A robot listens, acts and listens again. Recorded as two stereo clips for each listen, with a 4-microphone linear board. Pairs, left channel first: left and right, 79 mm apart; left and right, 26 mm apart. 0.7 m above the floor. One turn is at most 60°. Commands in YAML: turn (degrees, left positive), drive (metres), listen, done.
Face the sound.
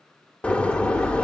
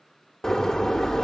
turn: 30
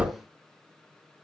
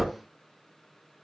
turn: -15
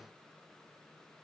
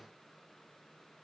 done: "I heard a door slam from this way, but can't make it out now."